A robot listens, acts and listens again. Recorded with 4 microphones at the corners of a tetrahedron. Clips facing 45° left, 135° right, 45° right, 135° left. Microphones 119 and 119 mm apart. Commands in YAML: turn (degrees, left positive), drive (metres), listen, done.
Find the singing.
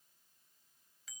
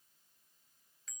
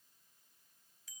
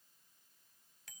listen: true
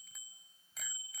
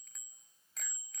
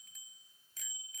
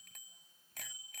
listen: true
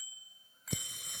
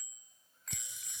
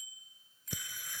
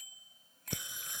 turn: 65
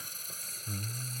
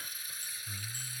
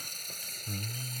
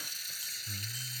done: "Found it: singing, straight ahead."